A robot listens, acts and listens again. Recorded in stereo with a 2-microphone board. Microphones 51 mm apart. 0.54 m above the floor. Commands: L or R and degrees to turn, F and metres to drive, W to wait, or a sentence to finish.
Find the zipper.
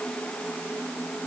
W
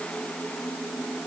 W
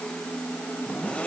L25
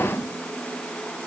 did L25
W
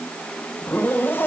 L130
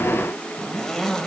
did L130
Facing the zipper, 1 to 2 m away.